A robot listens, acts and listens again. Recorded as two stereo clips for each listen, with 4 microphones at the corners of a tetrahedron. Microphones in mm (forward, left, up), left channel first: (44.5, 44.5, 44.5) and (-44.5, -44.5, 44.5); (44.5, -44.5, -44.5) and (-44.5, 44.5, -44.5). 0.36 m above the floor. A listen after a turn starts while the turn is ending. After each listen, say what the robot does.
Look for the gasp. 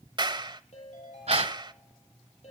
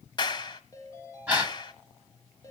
Turn 150° right.
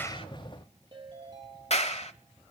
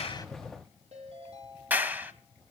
Facing where the gasp came from. I can't hear it now.